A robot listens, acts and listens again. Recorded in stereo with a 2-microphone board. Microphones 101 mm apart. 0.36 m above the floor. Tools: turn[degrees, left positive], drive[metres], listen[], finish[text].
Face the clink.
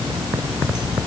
Action: listen[]
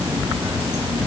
Action: listen[]
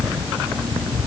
Action: finish[I can't make out a clink to turn to.]